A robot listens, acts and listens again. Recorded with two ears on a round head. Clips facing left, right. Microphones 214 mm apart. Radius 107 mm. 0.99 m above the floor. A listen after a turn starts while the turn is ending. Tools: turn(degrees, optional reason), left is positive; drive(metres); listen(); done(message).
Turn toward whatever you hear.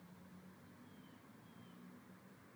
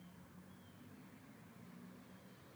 listen()
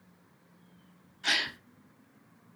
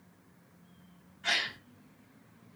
turn(degrees=55, reason="The gasp: about 55° left or 125° left.")
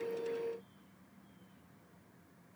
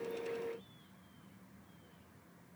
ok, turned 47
listen()
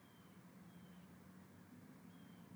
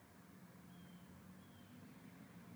done("I heard a gasp, but can't make it out now. It was about 5° left or 80° left.")